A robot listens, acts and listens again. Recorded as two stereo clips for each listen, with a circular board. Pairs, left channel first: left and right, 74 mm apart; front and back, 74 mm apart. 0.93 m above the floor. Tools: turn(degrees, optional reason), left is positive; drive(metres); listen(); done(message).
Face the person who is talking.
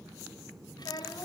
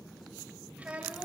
turn(degrees=105, reason="The child speaking: 105° left.")
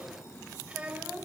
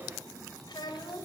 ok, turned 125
turn(degrees=-15, reason="The child speaking is now 15° right.")
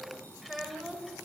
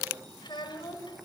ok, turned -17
done("Found it: a child speaking, straight ahead.")